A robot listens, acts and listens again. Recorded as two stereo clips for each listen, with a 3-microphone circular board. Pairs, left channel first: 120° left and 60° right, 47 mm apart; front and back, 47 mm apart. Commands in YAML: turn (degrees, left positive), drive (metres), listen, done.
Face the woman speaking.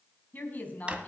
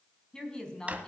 turn: 65
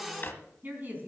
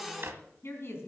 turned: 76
turn: -15
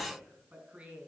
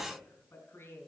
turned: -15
done: "Found it: a woman speaking, straight ahead."